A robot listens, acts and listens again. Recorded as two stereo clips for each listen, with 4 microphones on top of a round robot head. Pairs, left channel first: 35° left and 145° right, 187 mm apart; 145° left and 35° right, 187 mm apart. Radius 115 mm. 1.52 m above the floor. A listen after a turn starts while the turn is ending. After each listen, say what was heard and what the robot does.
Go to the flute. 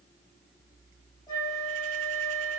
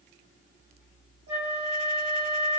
The flute: 35° right. Turn 35° right.
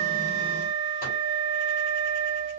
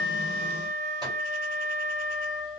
Drive 1.0 m forward.
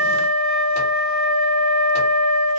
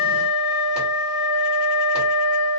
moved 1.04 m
Drive 1.0 m forward.
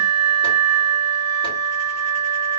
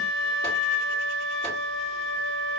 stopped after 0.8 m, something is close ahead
The flute is now 15° right. Turn 15° right.
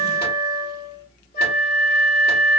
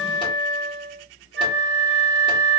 Arrived at the flute, straight ahead.